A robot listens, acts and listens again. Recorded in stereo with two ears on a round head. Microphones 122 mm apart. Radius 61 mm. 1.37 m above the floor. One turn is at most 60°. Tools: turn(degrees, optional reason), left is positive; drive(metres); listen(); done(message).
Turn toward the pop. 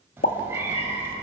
turn(degrees=60, reason="The pop: about 65° left or 115° left.")
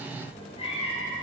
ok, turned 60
listen()
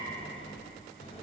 done("I heard a pop, but can't make it out now. It was about 5° left or 55° left.")